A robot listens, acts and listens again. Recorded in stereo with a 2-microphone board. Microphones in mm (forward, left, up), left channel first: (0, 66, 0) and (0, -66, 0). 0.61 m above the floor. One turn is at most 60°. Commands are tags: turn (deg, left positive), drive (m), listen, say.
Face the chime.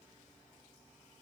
<listen/>
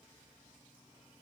<listen/>
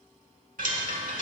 <turn deg="-60"/>
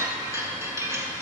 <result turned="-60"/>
<turn deg="-20"/>
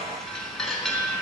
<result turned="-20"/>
<say>Facing the chime, 1 to 2 m away.</say>